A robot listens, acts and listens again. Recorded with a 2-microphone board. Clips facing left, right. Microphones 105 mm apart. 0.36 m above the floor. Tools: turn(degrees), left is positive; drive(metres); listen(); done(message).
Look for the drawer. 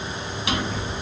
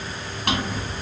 turn(degrees=-55)
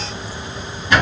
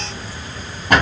turn(degrees=-65)
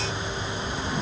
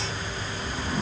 done("Found it: a drawer, straight ahead, 1 to 2 m away.")